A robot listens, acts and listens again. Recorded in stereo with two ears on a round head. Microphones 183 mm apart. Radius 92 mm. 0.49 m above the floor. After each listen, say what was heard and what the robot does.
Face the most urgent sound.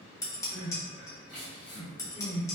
Turn 30° right.
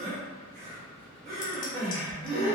So it is at 140° right. Turn 140° right.
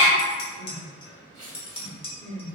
The crying is now 45° right. Turn 45° right.
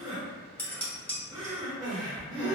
The crying is now 25° right. Turn 25° right.
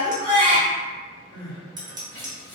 The crying is now 10° left. Turn 10° left.
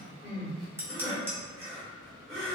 Found it: crying, straight ahead, 1 to 2 m away.